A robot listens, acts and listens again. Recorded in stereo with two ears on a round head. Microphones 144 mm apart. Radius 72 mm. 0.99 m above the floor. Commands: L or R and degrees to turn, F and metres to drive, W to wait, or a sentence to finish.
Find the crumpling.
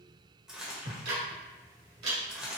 R30
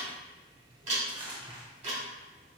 R145
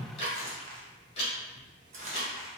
R50
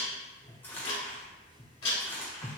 L15
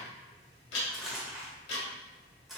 Found it: crumpling, straight ahead, 1 to 2 m away.